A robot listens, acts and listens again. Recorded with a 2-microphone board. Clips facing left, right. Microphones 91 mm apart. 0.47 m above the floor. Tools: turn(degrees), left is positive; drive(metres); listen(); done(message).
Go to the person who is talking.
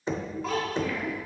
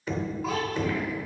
turn(degrees=30)
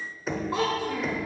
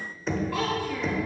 turn(degrees=155)
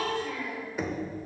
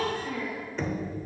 turn(degrees=-40)
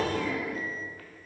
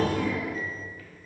listen()
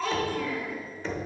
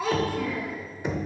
turn(degrees=-10)
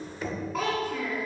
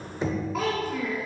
drive(metres=1.0)
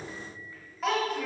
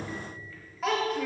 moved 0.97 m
drive(metres=1.0)
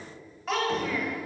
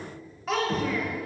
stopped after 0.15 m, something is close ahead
done("Arrived at the child speaking, straight ahead.")